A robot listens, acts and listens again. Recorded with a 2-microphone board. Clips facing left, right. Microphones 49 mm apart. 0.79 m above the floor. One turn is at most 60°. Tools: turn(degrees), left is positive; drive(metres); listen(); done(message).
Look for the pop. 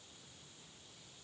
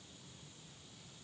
listen()
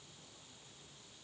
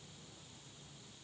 listen()
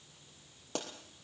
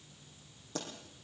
turn(degrees=60)
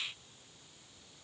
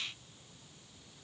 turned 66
listen()
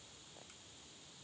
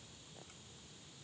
done("I heard a pop, but can't make it out now. It was about 10° left or 40° left.")